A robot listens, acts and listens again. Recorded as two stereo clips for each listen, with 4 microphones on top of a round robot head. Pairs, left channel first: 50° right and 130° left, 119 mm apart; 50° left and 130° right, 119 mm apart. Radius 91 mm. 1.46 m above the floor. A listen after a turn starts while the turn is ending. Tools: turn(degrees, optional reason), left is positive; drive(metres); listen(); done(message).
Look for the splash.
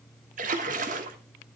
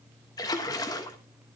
turn(degrees=110, reason="The splash: 110° left.")
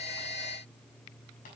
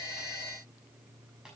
done("Facing where the splash came from. I can't hear it now.")